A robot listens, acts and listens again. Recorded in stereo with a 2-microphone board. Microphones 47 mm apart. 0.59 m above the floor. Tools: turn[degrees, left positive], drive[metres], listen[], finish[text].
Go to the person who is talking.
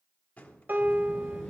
Action: turn[30]
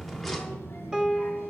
Thought: So it is at 135° left.
Action: turn[135]
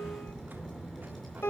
Action: drive[1.0]
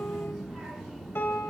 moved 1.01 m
Action: drive[1.0]
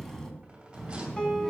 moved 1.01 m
Action: drive[1.0]
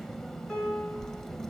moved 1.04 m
Action: drive[1.0]
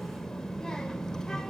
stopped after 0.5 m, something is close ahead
Thought: The child speaking is now 10° left.
Action: turn[10]
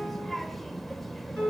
Action: finish[I am next to the child speaking.]